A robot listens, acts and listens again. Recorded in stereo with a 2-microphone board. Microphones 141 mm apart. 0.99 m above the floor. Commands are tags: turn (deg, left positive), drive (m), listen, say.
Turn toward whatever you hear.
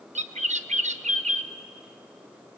<turn deg="-55"/>
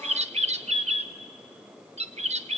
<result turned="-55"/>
<turn deg="-60"/>
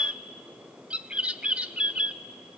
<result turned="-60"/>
<turn deg="-10"/>
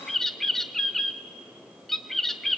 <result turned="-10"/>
<say>Facing the bird.</say>